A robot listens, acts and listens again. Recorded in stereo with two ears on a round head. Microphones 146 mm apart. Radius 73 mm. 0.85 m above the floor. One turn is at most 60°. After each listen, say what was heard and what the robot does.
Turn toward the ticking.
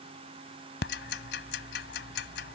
The ticking: about 70° left or 110° left. Turn 60° left.
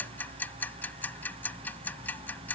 So it is at 10° left. Turn 10° left.
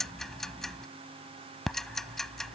Facing the ticking.